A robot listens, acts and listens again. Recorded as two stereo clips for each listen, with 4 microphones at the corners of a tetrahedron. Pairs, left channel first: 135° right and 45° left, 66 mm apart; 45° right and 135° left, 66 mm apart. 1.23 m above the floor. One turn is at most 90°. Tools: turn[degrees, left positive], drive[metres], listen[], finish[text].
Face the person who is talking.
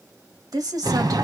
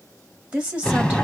Thought: The woman speaking: 70° left.
Action: turn[70]
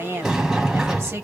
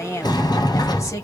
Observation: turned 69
Action: finish[Facing the woman speaking.]